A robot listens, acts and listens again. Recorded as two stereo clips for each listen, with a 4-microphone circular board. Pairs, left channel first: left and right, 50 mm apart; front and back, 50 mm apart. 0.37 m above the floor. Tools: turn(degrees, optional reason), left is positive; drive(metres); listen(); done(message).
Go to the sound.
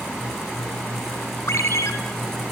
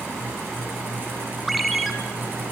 turn(degrees=90, reason="The ringtone: 90° left.")
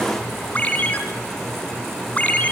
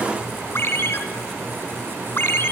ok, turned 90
turn(degrees=35, reason="The ringtone is now 35° left.")
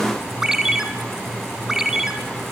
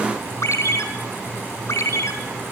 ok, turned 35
turn(degrees=-10, reason="The ringtone is now 10° right.")
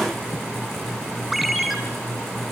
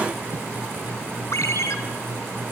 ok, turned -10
drive(metres=1.0)
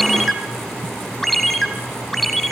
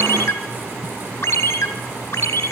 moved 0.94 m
drive(metres=1.0)
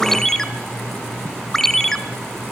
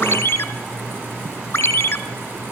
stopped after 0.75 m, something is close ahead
turn(degrees=10, reason="The ringtone is now 10° left.")
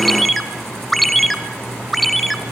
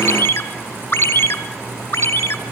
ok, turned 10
done("Arrived at the ringtone, straight ahead.")